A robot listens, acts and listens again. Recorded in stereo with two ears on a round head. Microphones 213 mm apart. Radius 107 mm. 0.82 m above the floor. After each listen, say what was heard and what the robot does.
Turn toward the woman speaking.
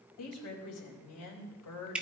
Turn 90° left.
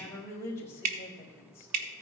So it is at 10° left. Turn 10° left.
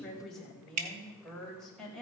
Facing the woman speaking, 2 to 4 m away.